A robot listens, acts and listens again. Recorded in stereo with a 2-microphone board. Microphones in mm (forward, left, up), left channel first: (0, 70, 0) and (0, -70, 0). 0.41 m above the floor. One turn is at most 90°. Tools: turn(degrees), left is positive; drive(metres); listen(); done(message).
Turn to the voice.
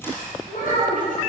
turn(degrees=75)
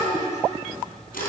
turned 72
turn(degrees=20)
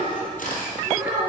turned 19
turn(degrees=-15)
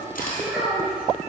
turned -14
turn(degrees=-10)
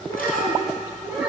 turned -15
done("Found it: a child speaking, straight ahead, over 4 m away.")